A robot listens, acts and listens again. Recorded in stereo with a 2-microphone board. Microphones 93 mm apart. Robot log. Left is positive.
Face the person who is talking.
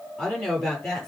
cmd yaw +30
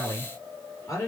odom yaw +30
note: So it is at 145° left.
cmd yaw +145
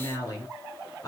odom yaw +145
note: The woman speaking is now 40° left.
cmd yaw +40
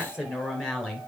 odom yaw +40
end: Found it: a woman speaking, straight ahead.